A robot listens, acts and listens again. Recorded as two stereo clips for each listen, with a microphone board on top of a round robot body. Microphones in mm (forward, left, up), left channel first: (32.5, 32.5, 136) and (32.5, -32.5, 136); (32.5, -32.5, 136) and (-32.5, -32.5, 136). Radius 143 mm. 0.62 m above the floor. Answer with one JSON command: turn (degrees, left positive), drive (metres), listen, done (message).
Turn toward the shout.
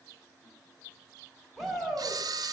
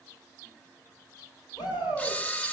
{"done": "Facing the shout, over 4 m away."}